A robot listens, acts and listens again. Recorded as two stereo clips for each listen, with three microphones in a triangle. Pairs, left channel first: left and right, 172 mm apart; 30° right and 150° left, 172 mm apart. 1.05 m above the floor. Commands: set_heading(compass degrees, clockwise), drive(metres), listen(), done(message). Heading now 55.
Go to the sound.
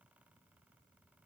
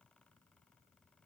listen()
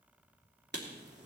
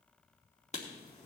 set_heading(135)
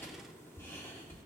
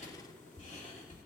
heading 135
set_heading(120)
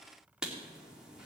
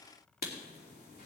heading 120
drive(1.0)
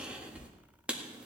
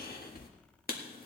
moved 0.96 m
drive(1.0)
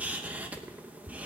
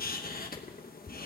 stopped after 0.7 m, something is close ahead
set_heading(130)
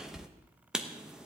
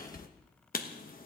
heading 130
done("I am next to the writing.")